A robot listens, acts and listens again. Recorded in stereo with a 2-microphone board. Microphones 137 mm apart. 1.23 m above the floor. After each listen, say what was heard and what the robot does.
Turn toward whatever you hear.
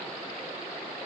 Keep listening.
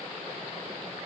Keep listening.
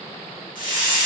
Turn 90° left.
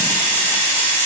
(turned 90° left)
So it is at 15° left. Turn 15° left.
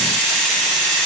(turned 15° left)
Found it: a hiss, straight ahead, 1 to 2 m away.